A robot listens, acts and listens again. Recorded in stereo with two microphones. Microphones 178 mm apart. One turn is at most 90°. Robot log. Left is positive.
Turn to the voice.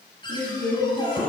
note: The woman speaking: about 70° left or 110° left.
cmd yaw +70
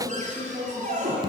end: Found it: a woman speaking, straight ahead.